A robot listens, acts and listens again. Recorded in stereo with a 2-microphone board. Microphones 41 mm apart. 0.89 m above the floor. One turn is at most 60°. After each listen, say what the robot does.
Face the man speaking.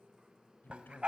Turn 50° left.
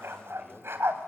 Keep listening.
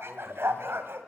Keep listening.
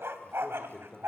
Turn 10° left.
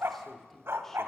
Turn 10° left.
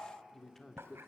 Turn 10° left.
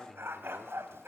Found it: a man speaking, straight ahead.